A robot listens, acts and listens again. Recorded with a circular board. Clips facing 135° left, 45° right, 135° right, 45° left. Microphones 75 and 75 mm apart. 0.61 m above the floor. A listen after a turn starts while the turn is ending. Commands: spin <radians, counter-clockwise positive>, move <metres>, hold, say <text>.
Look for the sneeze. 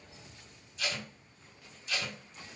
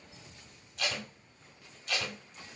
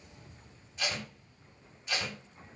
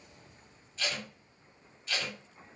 hold
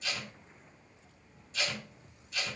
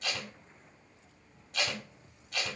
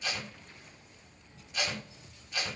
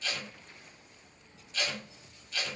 hold
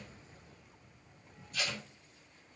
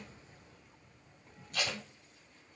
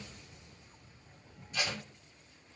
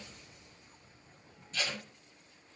say I can't make out a sneeze, only tape being pulled.